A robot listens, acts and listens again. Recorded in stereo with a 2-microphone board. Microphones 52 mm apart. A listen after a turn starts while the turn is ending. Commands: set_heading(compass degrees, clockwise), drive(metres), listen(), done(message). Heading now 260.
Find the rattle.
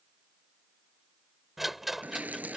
set_heading(230)
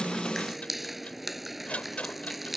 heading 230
set_heading(80)
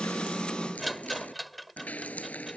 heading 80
done("Facing the rattle.")